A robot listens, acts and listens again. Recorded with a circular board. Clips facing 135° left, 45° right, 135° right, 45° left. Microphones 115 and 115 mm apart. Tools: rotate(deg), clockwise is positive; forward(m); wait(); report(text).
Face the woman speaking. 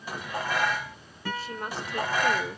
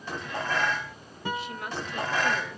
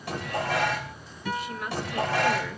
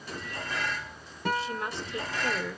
rotate(-110)
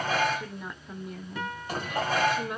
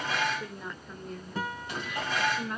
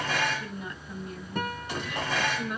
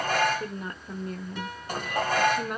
rotate(-70)
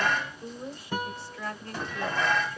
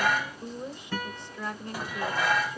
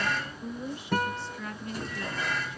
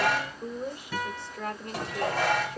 rotate(-20)
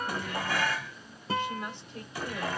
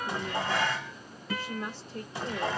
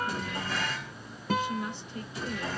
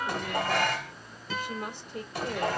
report("Facing the woman speaking.")